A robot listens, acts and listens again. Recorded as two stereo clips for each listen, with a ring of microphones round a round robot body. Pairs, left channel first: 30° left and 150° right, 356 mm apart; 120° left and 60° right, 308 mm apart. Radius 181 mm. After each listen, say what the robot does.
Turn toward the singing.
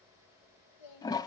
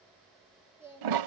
Turn 20° left.
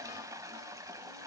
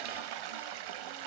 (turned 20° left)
Keep listening.
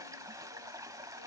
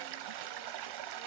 Keep listening.
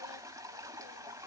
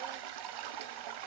Facing where the singing came from. I can't hear it now.